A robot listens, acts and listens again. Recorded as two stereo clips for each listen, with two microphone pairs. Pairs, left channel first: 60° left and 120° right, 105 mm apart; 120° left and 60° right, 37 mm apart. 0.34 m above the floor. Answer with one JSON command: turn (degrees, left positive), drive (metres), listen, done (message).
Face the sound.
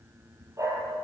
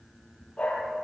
{"turn": 175}
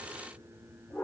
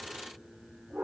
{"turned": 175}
{"turn": -10}
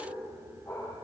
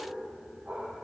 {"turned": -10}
{"done": "Facing the dog barking, over 4 m away."}